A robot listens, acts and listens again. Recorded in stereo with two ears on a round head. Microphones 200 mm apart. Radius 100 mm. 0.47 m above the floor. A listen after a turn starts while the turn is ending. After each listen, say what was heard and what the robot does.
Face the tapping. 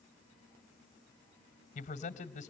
Keep listening.
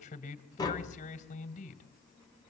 The tapping: about 20° left or 160° left. Turn 20° left.
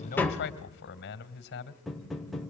Found it: tapping, straight ahead.